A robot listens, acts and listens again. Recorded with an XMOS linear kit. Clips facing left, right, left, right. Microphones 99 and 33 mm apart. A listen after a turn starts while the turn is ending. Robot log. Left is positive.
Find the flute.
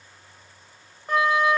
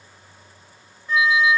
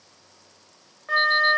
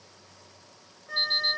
note: The flute: about 55° left or 125° left.
cmd yaw +55
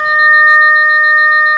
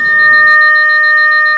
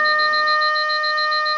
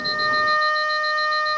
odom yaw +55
end: Facing the flute.